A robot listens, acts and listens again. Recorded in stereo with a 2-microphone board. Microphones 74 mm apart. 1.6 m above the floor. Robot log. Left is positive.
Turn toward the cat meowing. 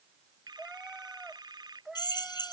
cmd yaw -30
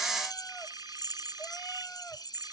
cmd idle
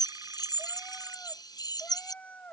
note: So it is at 20° left.
cmd yaw +20
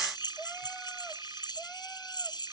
cmd idle
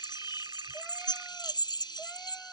cmd idle
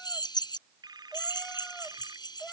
end: Found it: a cat meowing, straight ahead.